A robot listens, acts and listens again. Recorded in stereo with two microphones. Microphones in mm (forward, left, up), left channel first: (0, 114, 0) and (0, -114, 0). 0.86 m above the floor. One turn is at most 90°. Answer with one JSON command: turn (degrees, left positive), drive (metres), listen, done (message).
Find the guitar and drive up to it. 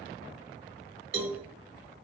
{"listen": true}
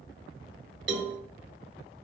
{"listen": true}
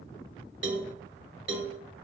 {"done": "I can't make out a guitar to turn to."}